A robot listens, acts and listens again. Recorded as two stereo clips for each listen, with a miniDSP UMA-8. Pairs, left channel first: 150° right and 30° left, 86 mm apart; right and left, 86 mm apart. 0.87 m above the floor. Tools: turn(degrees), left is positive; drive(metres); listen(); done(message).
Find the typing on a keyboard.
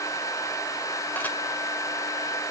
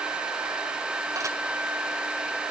listen()
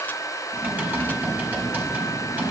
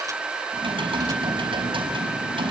turn(degrees=100)
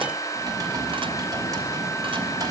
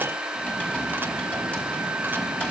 turn(degrees=-20)
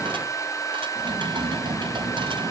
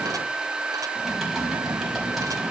done("Facing the typing on a keyboard, over 4 m away.")